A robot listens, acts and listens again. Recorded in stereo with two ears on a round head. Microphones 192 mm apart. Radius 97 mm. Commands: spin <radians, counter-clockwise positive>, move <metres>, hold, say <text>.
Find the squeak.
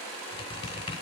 spin 0.44
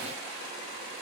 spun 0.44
hold
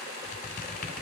spin 2.27
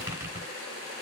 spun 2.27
spin -0.26
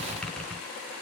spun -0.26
say Found it: a squeak, straight ahead, 2 to 4 m away.